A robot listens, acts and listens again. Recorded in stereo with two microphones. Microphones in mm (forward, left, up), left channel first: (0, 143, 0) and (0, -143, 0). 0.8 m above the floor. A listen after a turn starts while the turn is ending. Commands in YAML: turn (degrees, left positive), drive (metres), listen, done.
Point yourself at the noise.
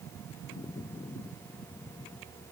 listen: true
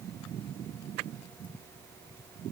listen: true
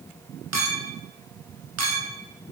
turn: -65
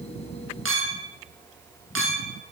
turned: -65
turn: -45
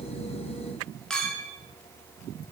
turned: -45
done: "Found it: a clink, straight ahead, under 1 m away."